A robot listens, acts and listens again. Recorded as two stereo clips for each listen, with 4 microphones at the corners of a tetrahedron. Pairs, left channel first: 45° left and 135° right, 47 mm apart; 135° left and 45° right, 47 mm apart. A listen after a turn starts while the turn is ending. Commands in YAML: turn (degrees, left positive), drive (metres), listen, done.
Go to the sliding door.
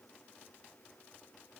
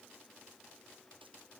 listen: true
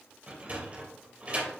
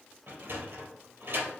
turn: -75
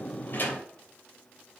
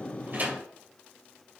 listen: true
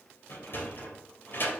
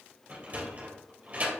turn: 15
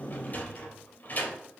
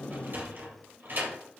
drive: 1.0
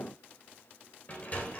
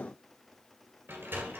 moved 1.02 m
drive: 1.0
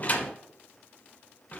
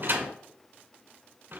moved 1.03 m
drive: 1.0
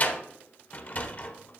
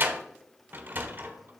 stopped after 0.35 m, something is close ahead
done: "I am next to the sliding door."